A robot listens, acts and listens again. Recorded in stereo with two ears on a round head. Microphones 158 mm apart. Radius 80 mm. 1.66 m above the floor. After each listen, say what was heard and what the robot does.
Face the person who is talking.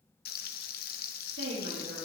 Turn 90° right.
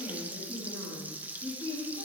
So it is at 10° left. Turn 10° left.
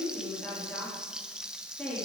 Found it: a woman speaking, straight ahead.